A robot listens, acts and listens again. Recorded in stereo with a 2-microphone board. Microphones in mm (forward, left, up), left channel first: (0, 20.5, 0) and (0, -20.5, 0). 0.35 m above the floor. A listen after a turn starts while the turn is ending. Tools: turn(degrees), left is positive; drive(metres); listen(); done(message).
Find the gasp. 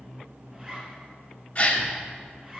turn(degrees=35)
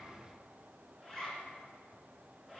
listen()
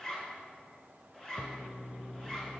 done("I heard a gasp, but can't make it out now. It was about straight ahead or 110° left.")